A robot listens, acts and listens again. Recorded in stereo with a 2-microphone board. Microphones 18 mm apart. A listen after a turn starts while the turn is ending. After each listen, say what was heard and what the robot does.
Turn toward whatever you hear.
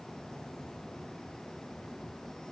Keep listening.
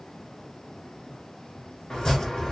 The chopping: about 50° left or 130° left. Turn 50° left.
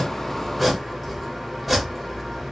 Facing the chopping.